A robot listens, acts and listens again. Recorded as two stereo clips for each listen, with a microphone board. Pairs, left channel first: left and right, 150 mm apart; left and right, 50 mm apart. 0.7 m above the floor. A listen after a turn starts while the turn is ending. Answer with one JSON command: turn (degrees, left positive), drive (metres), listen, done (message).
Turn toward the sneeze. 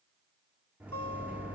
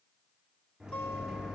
{"listen": true}
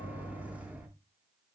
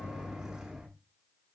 {"listen": true}
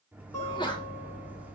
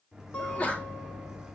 {"turn": 30}
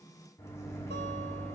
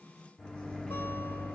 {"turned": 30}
{"listen": true}
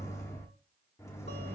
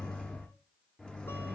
{"done": "I heard a sneeze, but can't make it out now. It was about straight ahead or 120° left."}